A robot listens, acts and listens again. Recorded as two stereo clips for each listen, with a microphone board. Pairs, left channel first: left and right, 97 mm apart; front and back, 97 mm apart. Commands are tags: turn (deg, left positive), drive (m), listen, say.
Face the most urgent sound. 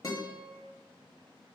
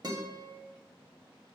<listen/>
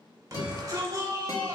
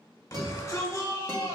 <turn deg="-45"/>
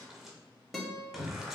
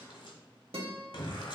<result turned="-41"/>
<say>Facing the shout.</say>